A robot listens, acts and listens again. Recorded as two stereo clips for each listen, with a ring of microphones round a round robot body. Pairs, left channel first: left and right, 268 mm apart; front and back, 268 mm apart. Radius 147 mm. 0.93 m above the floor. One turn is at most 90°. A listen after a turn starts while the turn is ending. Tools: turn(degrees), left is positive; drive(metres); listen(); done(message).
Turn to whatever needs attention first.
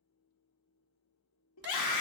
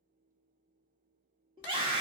turn(degrees=90)
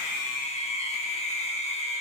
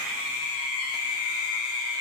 turn(degrees=25)
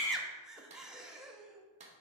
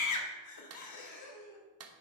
done("Facing the scream.")